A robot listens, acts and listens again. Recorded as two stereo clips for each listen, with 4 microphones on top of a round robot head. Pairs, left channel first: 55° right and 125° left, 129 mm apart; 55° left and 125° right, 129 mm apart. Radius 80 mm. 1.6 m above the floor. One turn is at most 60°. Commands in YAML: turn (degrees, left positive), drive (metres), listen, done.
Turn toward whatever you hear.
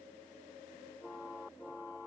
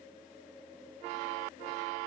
listen: true
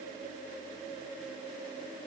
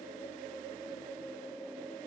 listen: true
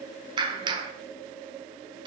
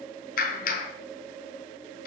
turn: 60
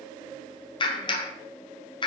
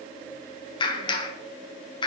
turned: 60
done: "Found it: a clap, straight ahead, 1 to 2 m away."